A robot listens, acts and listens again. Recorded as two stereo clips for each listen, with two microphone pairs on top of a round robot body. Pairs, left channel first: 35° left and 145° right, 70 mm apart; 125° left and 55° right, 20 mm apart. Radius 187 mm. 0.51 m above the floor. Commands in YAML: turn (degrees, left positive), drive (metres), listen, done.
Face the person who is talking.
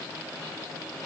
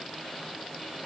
listen: true
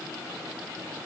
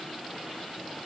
listen: true
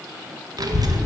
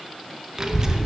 turn: -115
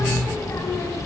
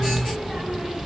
done: "Facing the child speaking."